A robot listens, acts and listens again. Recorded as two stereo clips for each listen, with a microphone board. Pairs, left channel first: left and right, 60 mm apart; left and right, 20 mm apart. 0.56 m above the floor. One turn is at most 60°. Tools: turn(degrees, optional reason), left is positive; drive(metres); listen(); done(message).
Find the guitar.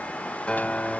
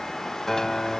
turn(degrees=20, reason="The guitar: about 20° left or 160° left.")
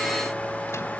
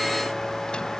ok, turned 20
listen()
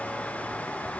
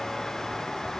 listen()
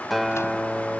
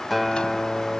done("Facing the guitar.")